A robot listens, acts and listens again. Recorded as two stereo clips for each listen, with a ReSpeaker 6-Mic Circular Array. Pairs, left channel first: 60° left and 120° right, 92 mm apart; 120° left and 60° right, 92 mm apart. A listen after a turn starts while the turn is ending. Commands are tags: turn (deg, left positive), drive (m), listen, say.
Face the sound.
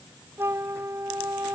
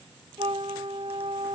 <turn deg="-60"/>
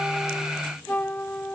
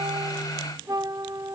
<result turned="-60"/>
<turn deg="-10"/>
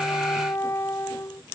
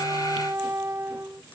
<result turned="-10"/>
<say>Found it: a flute, straight ahead.</say>